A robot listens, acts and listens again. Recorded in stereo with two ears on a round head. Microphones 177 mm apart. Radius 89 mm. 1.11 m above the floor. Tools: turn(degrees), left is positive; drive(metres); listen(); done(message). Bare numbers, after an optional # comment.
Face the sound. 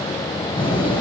# The door slam: about 25° left or 155° left.
turn(25)
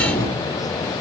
# So it is at 125° left.
turn(125)
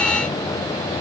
done("Facing where the door slam came from. I can't hear it now.")